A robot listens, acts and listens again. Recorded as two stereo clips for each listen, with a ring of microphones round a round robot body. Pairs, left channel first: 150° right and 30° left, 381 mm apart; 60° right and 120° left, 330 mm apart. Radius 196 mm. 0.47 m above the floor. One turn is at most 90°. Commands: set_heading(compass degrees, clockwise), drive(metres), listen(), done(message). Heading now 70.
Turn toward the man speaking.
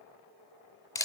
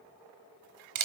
listen()
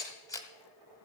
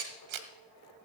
listen()
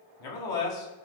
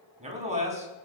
set_heading(160)
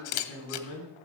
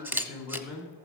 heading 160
set_heading(250)
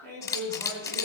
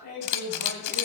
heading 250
set_heading(260)
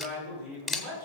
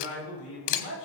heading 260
done("Found it: a man speaking, straight ahead, over 4 m away.")